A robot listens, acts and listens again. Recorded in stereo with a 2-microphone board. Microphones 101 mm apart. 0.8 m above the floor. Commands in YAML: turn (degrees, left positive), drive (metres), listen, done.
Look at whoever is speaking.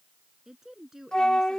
turn: -30
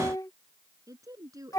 turn: -145
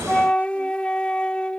listen: true
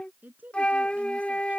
turn: -15
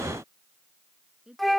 done: "Found it: a woman speaking, straight ahead."